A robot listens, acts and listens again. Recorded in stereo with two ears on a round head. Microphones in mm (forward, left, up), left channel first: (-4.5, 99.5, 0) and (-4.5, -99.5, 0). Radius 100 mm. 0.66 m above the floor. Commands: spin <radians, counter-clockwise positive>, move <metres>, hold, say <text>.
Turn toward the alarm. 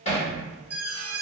spin -0.52
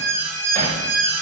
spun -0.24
say Facing the alarm, 1 to 2 m away.